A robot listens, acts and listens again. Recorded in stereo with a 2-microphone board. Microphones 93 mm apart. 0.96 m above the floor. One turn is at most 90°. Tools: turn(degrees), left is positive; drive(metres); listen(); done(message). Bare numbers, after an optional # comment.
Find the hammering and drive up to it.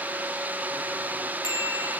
listen()
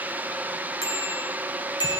listen()
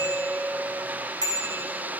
done("I can't make out hammering, only a bicycle bell.")